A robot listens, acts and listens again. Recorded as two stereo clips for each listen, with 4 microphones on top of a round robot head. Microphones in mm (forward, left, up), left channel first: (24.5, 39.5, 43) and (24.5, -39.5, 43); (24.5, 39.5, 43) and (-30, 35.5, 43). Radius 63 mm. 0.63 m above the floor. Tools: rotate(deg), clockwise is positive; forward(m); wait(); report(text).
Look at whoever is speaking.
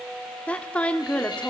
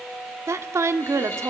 rotate(-165)
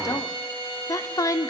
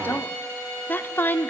rotate(-50)
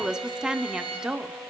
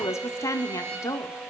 rotate(10)
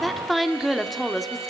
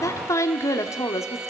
report("Found it: a woman speaking, straight ahead, 1 to 2 m away.")